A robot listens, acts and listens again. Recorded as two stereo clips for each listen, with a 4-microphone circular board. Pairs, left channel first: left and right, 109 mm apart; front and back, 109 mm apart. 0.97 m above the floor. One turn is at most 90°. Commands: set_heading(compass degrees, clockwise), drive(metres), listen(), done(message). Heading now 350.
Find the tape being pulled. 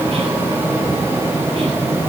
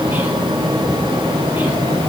listen()
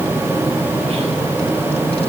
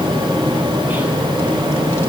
listen()
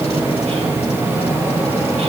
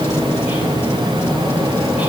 done("I can't make out tape being pulled to turn to.")